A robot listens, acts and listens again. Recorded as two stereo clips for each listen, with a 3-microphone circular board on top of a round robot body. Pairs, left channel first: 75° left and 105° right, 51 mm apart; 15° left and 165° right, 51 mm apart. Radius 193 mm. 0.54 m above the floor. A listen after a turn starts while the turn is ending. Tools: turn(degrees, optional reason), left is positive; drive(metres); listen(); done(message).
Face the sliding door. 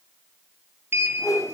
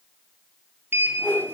turn(degrees=-130, reason="The sliding door: 130° right.")
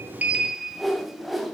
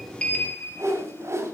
turn(degrees=-25, reason="The sliding door is now 25° right.")
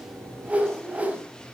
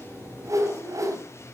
done("Facing the sliding door, 2 to 4 m away.")